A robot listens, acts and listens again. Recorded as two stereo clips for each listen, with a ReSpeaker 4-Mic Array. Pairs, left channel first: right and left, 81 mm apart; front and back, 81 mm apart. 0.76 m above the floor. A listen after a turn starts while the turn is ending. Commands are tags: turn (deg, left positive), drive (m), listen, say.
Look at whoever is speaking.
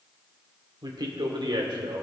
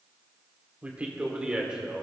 <turn deg="100"/>
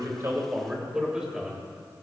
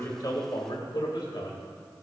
<say>Facing the man speaking.</say>